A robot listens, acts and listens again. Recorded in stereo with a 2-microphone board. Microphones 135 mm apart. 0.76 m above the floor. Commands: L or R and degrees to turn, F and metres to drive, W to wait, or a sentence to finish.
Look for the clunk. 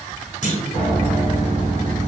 L55
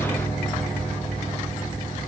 W
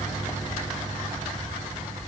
I heard a clunk, but can't make it out now. It was about straight ahead or 70° left.